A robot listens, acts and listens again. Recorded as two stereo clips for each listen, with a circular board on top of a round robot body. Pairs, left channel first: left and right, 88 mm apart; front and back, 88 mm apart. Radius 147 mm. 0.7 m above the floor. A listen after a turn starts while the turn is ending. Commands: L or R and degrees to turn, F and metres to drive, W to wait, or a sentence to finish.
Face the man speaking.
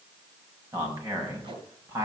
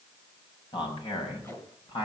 R30
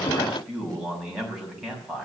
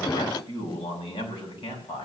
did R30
R10
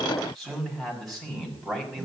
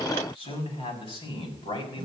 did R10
Found it: a man speaking, straight ahead.